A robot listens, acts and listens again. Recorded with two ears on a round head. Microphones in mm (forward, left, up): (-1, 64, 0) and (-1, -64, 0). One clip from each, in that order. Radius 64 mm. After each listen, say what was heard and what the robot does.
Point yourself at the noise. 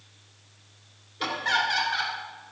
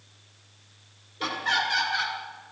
Turn 30° left.
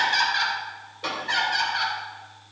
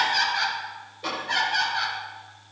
So it is at 150° left. Turn 150° left.
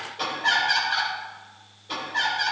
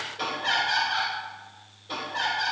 Found it: laughter, straight ahead, over 4 m away.